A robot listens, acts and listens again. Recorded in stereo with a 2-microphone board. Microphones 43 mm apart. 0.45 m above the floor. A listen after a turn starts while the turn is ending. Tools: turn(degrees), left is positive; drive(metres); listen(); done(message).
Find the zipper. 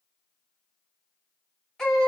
listen()
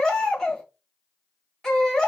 listen()
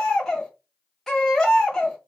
done("I can't make out a zipper to turn to.")